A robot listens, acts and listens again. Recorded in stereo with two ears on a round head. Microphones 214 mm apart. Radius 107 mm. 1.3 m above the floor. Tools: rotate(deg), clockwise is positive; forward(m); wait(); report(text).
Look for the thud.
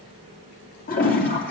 wait()
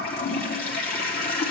wait()
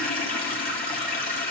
report("I can't make out a thud, only a toilet flushing.")